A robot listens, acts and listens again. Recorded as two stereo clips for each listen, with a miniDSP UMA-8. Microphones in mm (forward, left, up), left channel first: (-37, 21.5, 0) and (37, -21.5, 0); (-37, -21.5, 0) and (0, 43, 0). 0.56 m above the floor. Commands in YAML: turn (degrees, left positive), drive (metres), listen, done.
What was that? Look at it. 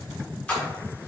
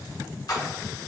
turn: -140
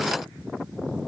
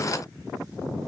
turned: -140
done: "Facing where the splash came from. I can't hear it now."